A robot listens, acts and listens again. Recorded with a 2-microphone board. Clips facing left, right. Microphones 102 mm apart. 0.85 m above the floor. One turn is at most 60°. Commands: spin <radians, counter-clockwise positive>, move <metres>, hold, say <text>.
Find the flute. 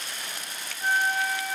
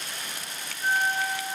spin -0.52
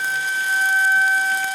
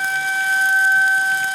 spin 0.44
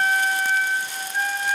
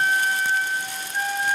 say Facing the flute.